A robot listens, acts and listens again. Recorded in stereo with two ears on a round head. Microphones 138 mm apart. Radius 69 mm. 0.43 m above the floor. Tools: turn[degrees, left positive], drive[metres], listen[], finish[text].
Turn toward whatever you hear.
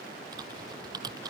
Thought: The typing on a keyboard: about 25° right or 155° right.
Action: turn[-25]
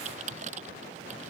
Thought: So it is at 130° right.
Action: turn[-130]
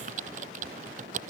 Thought: The typing on a keyboard is now 50° right.
Action: turn[-50]
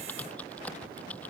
Thought: The typing on a keyboard is now 10° left.
Action: turn[10]
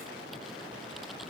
Action: listen[]
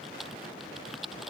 Action: finish[Found it: typing on a keyboard, straight ahead.]